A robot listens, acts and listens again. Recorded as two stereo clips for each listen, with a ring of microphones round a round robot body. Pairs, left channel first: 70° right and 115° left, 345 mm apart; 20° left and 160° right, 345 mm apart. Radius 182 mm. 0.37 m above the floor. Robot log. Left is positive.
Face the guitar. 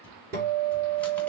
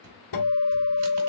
note: The guitar: 50° left.
cmd yaw +50
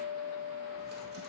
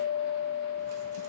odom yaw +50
end: Found it: a guitar, straight ahead.